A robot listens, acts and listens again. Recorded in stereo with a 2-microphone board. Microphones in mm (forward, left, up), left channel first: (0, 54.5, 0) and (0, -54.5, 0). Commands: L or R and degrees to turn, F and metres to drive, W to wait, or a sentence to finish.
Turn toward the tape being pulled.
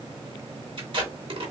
R55
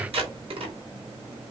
R65
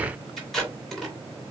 Facing the tape being pulled.